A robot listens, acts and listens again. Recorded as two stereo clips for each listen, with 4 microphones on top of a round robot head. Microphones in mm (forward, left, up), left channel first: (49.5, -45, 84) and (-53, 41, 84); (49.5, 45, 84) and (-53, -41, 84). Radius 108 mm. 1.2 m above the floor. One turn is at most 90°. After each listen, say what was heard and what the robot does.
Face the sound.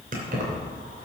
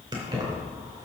The keys jangling: 155° left. Turn 90° left.
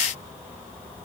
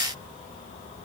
Nothing new. It was at 65° left. Turn 65° left.
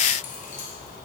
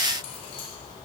Keep listening.
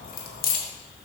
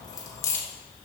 The keys jangling is now 35° right. Turn 35° right.
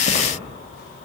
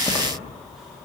The keys jangling is now 45° right. Turn 45° right.
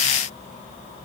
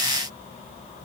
Keep listening.
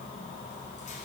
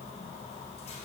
Keep listening.
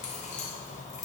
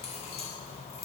Found it: keys jangling, straight ahead.